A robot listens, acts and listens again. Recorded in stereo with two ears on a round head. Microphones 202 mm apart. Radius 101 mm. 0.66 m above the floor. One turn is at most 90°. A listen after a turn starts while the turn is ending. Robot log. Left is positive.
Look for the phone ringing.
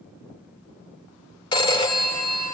note: The phone ringing: about 20° left or 160° left.
cmd yaw +20
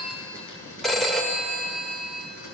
end: Found it: a phone ringing, straight ahead, 1 to 2 m away.